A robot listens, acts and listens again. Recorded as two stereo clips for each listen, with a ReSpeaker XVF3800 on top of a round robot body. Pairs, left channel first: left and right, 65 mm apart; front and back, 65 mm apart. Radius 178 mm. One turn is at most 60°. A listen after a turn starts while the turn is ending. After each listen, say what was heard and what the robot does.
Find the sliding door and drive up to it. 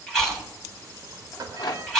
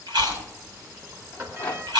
The sliding door: 125° right. Turn 60° right.
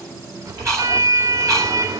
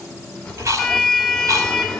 The sliding door is now 75° right. Turn 60° right.
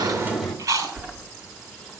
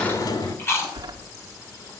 The sliding door is now 10° left. Turn 10° left.
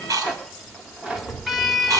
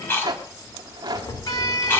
Drive 1.0 m forward.
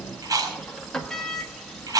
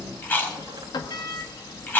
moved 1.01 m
The sliding door is now 10° left. Turn 10° left.
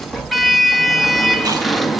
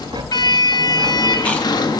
Drive 1.0 m forward.
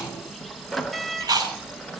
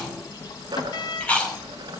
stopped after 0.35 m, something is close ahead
I am next to the sliding door.